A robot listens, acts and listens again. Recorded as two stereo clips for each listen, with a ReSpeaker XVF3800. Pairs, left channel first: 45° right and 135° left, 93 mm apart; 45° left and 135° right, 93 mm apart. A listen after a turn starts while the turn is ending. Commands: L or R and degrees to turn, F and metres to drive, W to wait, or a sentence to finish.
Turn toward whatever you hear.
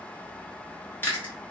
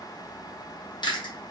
L20
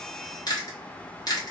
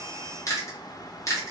Facing the chewing, 1 to 2 m away.